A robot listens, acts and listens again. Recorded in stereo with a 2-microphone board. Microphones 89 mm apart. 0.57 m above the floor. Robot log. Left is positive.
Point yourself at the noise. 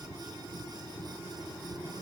cmd idle
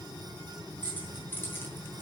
note: The keys jangling: about 20° left or 160° left.
cmd yaw +20
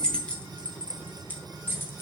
note: The keys jangling: about 25° left or 155° left.
cmd yaw +25
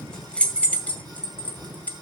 note: The keys jangling: about 15° left or 165° left.
cmd yaw +15
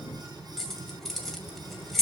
cmd yaw +30
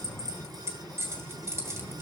note: So it is at 30° right.
cmd yaw -30
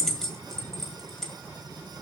end: Facing the keys jangling.